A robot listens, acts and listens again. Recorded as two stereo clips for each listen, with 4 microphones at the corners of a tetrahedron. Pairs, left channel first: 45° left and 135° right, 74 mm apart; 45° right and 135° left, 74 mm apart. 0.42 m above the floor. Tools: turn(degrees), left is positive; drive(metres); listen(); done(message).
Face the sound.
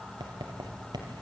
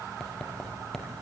turn(degrees=-130)
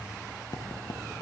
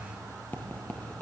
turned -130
turn(degrees=25)
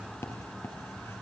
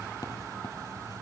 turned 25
turn(degrees=-10)
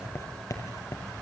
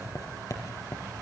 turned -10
done("Facing the writing.")